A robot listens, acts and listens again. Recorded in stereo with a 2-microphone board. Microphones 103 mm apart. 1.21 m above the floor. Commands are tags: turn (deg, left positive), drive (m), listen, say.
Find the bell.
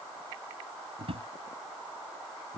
<listen/>
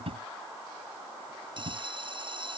<turn deg="-55"/>
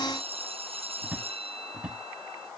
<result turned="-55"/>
<turn deg="-70"/>
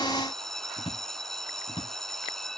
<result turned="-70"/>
<say>Facing the bell.</say>